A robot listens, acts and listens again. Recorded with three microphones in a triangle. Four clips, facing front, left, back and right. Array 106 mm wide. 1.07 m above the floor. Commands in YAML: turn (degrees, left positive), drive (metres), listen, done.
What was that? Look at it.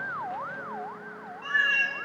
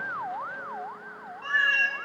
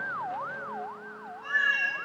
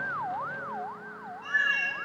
turn: 70
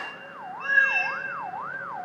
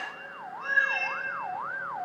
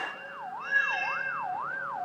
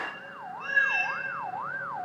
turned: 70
turn: 15
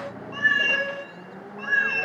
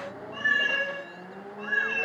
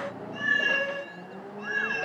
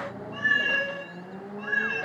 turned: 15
done: "Found it: a cat meowing, straight ahead, 2 to 4 m away."